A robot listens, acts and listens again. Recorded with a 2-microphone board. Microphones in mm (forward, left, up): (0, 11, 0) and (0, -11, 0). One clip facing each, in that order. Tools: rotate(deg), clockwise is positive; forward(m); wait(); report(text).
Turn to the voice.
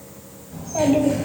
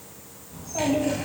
rotate(-25)
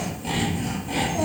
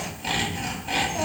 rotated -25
wait()
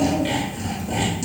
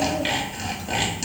rotate(20)
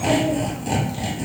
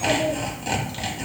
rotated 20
rotate(10)
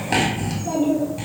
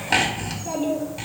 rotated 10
report("Found it: a child speaking, straight ahead, over 4 m away.")